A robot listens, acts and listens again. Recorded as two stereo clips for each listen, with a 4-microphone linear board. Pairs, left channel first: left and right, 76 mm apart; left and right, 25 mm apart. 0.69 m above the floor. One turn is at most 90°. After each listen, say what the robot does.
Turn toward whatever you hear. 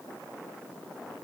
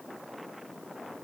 Keep listening.
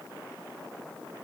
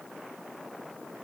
Keep listening.
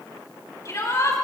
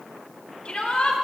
Turn 50° left.
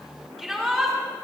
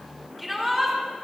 Facing the shout, over 4 m away.